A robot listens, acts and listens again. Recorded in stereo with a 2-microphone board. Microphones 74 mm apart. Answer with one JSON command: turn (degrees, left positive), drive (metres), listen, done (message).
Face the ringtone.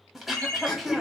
{"turn": 40}
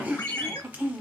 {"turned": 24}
{"turn": 110}
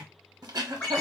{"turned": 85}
{"turn": 25}
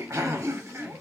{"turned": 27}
{"listen": true}
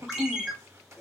{"done": "Found it: a ringtone, straight ahead, 1 to 2 m away."}